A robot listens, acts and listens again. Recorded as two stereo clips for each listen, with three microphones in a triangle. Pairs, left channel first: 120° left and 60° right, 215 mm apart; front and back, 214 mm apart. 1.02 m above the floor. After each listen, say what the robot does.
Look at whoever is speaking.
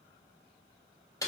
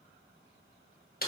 Keep listening.
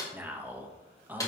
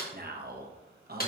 Turn 140° right.
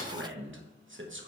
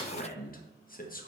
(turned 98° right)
Turn 45° right.
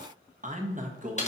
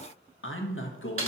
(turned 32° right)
Turn 10° right.
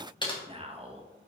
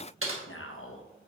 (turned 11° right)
Found it: a man speaking, straight ahead.